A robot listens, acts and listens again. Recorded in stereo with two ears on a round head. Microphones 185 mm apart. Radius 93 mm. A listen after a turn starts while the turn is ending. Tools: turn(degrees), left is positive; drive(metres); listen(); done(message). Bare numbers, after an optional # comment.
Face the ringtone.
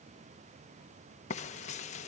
listen()
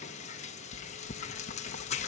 listen()
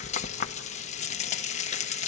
done("I can't make out a ringtone to turn to.")